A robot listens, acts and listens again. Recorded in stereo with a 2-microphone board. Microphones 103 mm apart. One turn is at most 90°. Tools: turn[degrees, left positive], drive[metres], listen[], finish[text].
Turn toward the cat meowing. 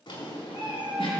Thought: The cat meowing: about 55° right or 125° right.
Action: turn[-55]
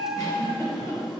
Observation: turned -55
Thought: So it is at 25° right.
Action: turn[-25]
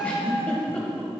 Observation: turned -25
Thought: The cat meowing is now 25° right.
Action: turn[-25]
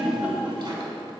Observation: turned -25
Action: listen[]
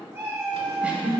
Thought: The cat meowing is now 30° right.
Action: turn[-30]
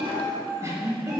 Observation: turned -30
Action: finish[Found it: a cat meowing, straight ahead.]